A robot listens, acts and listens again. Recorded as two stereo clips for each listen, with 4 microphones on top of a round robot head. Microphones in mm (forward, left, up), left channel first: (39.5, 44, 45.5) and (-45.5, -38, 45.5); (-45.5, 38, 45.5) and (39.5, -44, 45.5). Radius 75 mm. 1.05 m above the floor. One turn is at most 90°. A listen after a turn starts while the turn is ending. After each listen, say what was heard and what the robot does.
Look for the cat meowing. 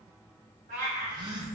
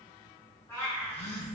The cat meowing: 155° right. Turn 90° right.
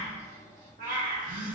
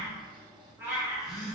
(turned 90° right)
The cat meowing is now 120° right. Turn 90° right.
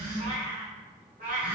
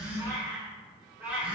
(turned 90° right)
The cat meowing is now 125° right. Turn 90° right.
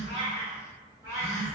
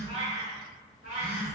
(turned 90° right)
The cat meowing is now 75° right. Turn 75° right.
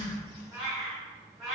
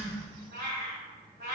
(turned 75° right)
The cat meowing is now 50° right. Turn 50° right.
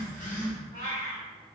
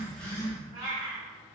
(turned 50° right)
The cat meowing is now 10° left. Turn 10° left.
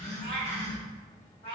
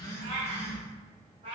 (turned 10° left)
Facing the cat meowing, 1 to 2 m away.